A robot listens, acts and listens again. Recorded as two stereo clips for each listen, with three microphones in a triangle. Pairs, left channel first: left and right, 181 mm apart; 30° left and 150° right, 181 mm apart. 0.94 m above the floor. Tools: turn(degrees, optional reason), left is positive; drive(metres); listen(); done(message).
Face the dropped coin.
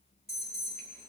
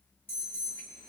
listen()
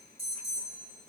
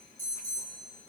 listen()
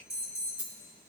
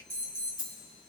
turn(degrees=-10, reason="The dropped coin: 10° right.")
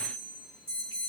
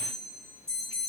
done("I heard a dropped coin from this way, but can't make it out now.")